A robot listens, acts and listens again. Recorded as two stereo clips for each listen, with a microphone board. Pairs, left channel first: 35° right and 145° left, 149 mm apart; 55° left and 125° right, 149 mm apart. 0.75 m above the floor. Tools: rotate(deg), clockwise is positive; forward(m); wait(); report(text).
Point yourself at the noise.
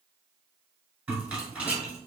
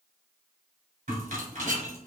rotate(135)
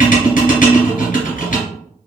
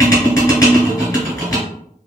rotate(10)
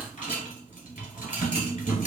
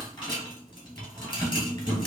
report("Facing the rattle.")